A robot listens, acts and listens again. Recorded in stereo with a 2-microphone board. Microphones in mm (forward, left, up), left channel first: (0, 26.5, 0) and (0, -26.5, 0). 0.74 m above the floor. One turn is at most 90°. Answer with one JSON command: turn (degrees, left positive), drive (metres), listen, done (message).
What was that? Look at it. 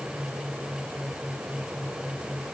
{"listen": true}
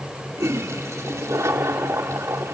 {"turn": -70}
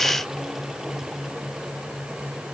{"listen": true}
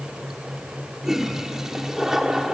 {"turn": -10}
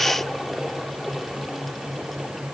{"done": "Found it: a toilet flushing, straight ahead, 1 to 2 m away."}